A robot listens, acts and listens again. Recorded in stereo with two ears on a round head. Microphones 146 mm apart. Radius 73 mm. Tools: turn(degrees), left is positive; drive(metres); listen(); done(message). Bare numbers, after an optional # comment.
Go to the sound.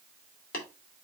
# The tapping: about 60° left or 120° left.
turn(60)
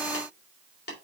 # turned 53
# So it is at 70° left.
turn(70)
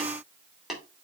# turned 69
drive(1.0)
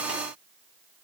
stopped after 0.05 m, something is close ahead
done("Blocked. The tapping is further on, straight ahead.")